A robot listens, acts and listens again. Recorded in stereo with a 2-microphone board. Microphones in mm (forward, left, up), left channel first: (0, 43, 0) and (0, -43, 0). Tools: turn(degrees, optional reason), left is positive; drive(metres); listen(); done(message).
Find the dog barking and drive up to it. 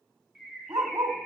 turn(degrees=-55, reason="The dog barking: about 55° right or 125° right.")
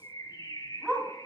turn(degrees=-15, reason="So it is at 15° right.")
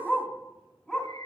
drive(metres=1.0)
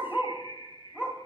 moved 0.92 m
turn(degrees=-20, reason="The dog barking is now 20° right.")
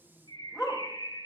drive(metres=1.0)
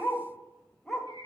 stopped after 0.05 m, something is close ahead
done("Arrived at the dog barking, straight ahead.")